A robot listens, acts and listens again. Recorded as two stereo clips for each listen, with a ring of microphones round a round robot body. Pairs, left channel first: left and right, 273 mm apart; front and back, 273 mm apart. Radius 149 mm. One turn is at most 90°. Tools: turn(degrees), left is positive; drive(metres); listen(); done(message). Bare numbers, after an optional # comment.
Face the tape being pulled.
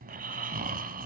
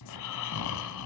listen()
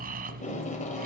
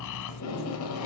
# The tape being pulled: 25° left.
turn(25)
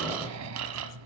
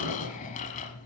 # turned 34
listen()
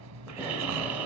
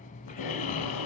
listen()
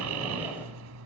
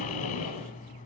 done("Facing where the tape being pulled came from. I can't hear it now.")